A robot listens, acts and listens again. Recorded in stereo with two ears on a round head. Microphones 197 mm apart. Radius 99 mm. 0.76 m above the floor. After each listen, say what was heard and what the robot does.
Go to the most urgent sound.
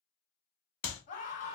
The scream: about 35° left or 145° left. Turn 35° left.
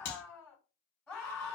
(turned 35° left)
Drive 1.0 m forward.
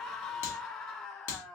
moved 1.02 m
Drive 1.0 m forward.
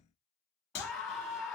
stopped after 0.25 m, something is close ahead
Arrived at the scream, straight ahead.